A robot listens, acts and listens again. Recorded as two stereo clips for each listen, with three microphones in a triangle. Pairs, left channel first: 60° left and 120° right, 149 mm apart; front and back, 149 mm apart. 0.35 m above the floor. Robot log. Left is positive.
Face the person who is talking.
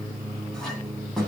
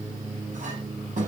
cmd idle
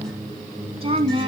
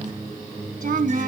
note: The woman speaking: 170° right.
cmd yaw -170
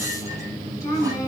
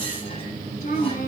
note: The woman speaking is now 10° right.
cmd yaw -10
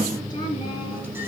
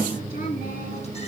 cmd idle
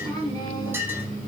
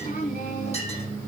end: Found it: a woman speaking, straight ahead, over 4 m away.